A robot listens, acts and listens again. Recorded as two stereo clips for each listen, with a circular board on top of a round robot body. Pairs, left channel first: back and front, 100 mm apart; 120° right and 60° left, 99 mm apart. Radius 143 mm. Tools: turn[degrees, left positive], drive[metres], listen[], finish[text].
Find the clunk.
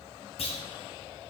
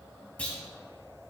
Thought: The clunk: 160° left.
Action: turn[160]
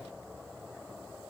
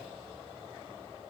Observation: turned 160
Action: finish[Facing where the clunk came from. I can't hear it now.]